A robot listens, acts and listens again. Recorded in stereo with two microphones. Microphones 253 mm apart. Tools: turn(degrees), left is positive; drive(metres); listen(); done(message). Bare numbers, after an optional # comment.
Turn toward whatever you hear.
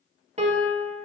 # The piano: about 30° right or 150° right.
turn(-30)
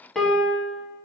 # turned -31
done("Facing the piano.")